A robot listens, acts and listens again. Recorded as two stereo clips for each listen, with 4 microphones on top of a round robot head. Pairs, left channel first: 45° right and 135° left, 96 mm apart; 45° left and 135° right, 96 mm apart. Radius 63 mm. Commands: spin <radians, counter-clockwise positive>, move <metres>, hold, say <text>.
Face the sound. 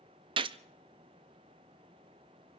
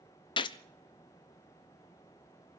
spin 1.66
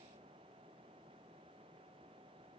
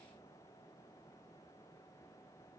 say Facing where the gunshot came from. I can't hear it now.